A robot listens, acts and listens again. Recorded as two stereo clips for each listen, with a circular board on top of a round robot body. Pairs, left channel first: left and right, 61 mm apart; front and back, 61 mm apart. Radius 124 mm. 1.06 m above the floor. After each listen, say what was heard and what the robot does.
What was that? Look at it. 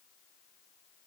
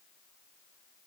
Keep listening.
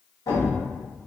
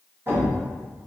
The thud: 125° left. Turn 125° left.
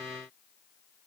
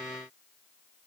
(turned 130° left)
I heard a thud from this way, but can't make it out now.